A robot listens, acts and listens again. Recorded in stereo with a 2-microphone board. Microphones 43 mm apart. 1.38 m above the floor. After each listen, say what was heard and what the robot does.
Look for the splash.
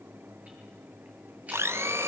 Keep listening.
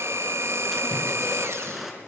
Turn 30° right.
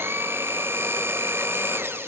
Keep listening.
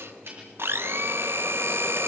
I heard a splash, but can't make it out now. It was about 25° left or 145° right.